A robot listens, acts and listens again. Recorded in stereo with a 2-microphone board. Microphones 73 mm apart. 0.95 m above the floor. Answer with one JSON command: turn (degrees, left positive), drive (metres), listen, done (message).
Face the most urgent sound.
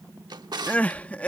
{"turn": 20}
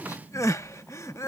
{"turn": 135}
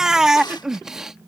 {"turn": -10}
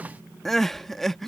{"done": "Facing the crying."}